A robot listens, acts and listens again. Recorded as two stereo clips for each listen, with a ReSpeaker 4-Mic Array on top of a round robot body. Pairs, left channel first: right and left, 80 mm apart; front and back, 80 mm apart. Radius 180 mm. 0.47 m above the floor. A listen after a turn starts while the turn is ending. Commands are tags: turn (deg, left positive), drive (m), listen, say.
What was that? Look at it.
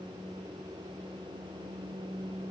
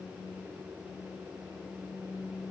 <listen/>
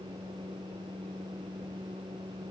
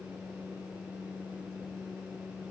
<listen/>
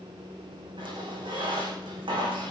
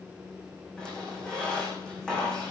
<turn deg="80"/>
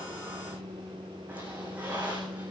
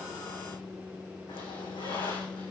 <turn deg="15"/>
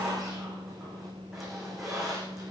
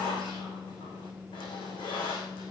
<say>Facing the squeak, over 4 m away.</say>